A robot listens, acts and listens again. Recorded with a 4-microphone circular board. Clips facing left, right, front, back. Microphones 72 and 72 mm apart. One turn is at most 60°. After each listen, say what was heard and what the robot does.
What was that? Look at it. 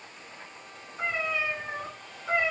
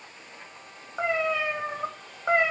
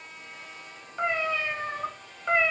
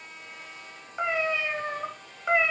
The cat meowing: 100° right. Turn 60° right.
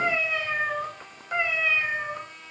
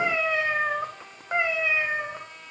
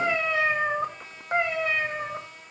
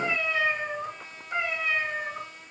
The cat meowing is now 25° right. Turn 25° right.
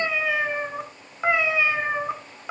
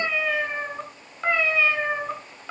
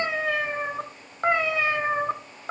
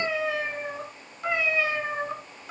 The cat meowing is now 15° left. Turn 15° left.
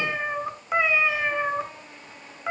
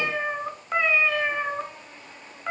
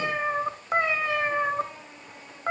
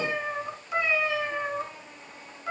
Found it: a cat meowing, straight ahead, 1 to 2 m away.